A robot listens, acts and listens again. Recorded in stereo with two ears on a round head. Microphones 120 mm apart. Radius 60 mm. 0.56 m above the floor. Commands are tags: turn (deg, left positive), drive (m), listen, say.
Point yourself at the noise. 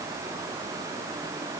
<listen/>
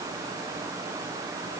<listen/>
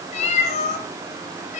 <turn deg="55"/>
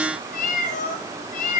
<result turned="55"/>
<turn deg="65"/>
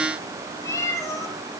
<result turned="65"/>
<turn deg="25"/>
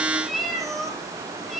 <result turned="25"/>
<say>Facing the cat meowing.</say>